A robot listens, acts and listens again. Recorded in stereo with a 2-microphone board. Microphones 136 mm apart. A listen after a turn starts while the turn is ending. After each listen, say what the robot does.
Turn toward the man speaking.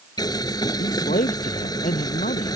Turn 90° left.
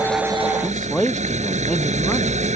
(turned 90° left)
Found it: a man speaking, straight ahead.